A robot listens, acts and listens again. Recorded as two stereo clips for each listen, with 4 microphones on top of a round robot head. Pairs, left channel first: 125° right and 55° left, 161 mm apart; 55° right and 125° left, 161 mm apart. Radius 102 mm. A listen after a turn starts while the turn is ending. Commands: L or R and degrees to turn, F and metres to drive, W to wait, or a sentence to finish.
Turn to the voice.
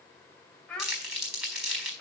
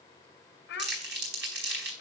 R40
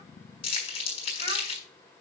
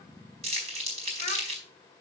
W
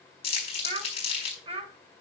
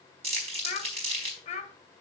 Facing the child speaking.